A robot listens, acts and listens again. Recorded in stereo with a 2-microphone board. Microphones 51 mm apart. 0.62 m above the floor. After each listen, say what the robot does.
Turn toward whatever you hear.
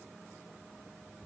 Keep listening.
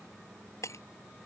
Turn 70° left.
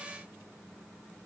Keep listening.
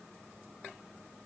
I heard breaking glass, but can't make it out now. It was about straight ahead or 40° left.